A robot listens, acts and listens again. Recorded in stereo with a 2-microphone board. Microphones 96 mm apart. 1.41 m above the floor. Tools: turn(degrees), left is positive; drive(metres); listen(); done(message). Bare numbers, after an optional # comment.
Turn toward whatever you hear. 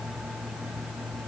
listen()
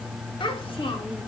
# The child speaking: about 60° left or 120° left.
turn(60)
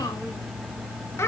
# So it is at 25° left.
turn(25)
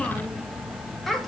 done("Facing the child speaking, 1 to 2 m away.")